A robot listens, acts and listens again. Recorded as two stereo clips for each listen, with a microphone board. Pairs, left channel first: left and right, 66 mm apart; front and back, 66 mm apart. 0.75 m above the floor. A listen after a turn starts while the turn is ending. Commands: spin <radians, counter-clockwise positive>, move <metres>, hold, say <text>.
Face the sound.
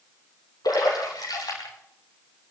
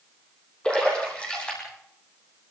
spin 1.31
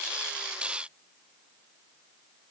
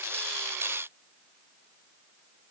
say Facing where the splash came from. I can't hear it now.